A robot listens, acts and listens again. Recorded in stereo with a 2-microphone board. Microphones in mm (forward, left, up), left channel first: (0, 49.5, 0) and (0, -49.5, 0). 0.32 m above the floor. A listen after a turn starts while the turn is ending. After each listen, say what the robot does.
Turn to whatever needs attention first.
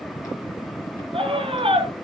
Turn 75° right.
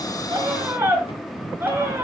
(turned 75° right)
Turn 25° right.
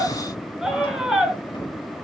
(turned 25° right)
Found it: a scream, straight ahead, over 4 m away.